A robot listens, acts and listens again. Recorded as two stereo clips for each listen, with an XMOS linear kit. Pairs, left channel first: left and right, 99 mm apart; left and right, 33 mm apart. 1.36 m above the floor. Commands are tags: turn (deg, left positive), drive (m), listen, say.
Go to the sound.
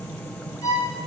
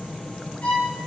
<turn deg="35"/>
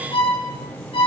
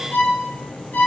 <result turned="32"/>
<turn deg="110"/>
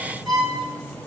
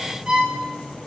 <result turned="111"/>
<drive m="1.0"/>
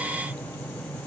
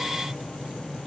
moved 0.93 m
<listen/>
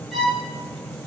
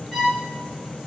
<drive m="1.0"/>
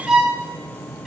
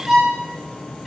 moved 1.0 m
<drive m="1.0"/>
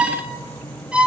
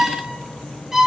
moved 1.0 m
<turn deg="-10"/>
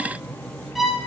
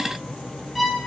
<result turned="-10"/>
<drive m="1.0"/>
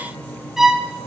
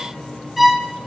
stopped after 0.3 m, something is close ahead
<say>Arrived at the violin, straight ahead.</say>